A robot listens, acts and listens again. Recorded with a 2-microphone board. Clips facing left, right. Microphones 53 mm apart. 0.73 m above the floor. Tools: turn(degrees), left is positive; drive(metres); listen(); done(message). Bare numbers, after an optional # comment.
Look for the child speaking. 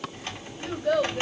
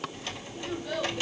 # The child speaking: about 55° left or 125° left.
turn(55)
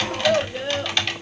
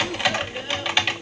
# So it is at 70° left.
turn(70)
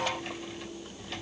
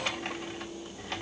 listen()
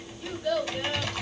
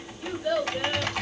# The child speaking is now 15° right.
turn(-15)
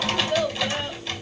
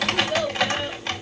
done("Facing the child speaking, 2 to 4 m away.")